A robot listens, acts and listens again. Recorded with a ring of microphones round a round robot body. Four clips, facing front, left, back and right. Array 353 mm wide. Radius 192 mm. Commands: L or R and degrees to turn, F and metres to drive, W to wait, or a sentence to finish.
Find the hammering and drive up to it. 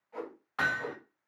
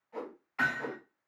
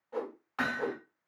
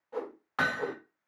R90
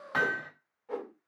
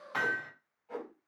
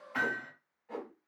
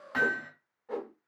F1.0
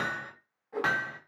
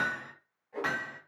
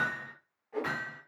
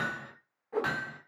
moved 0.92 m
F1.0
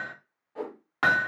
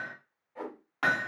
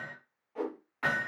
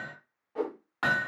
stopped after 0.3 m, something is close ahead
I am next to the hammering.